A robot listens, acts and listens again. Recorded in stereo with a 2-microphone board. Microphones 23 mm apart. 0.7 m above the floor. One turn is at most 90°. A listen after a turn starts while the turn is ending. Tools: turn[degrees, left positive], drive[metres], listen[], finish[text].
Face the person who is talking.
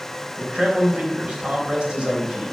Thought: The man speaking: about 40° right or 140° right.
Action: turn[-40]
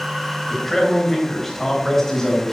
Thought: So it is at 15° left.
Action: turn[15]
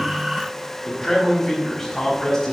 Thought: The man speaking is now 10° left.
Action: turn[10]
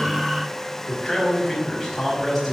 Action: finish[Found it: a man speaking, straight ahead.]